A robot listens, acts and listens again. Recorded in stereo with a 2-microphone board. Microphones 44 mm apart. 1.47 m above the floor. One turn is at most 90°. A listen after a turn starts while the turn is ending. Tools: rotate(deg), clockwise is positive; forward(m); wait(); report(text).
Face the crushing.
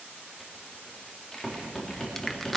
rotate(-30)
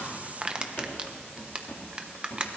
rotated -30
rotate(25)
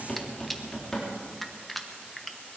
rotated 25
report("Found it: crushing, straight ahead, 1 to 2 m away.")